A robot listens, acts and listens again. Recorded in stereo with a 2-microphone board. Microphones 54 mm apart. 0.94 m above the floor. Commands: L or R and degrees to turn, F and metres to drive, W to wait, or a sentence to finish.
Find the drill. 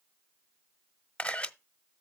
W
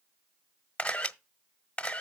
W
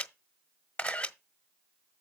I can't make out a drill to turn to.